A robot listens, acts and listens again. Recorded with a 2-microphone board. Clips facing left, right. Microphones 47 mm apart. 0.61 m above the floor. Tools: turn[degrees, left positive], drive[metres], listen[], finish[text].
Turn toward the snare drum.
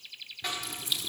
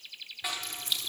Action: turn[-30]
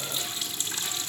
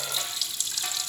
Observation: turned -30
Action: listen[]
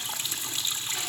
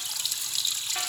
Action: listen[]
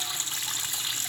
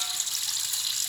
Action: finish[I heard a snare drum, but can't make it out now. It was about 25° left or 145° right.]